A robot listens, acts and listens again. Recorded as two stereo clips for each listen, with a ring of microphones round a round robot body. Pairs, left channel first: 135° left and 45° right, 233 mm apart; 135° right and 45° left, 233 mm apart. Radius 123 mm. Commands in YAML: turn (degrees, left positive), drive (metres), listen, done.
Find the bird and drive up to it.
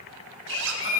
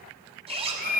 turn: 170
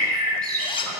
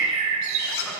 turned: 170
turn: 30
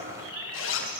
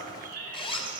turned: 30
turn: -15
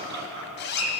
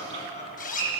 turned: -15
drive: 1.0
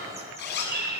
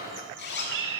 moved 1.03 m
drive: 1.0
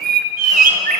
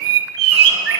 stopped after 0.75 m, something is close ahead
turn: 10
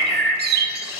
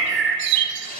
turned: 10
done: "I am next to the bird."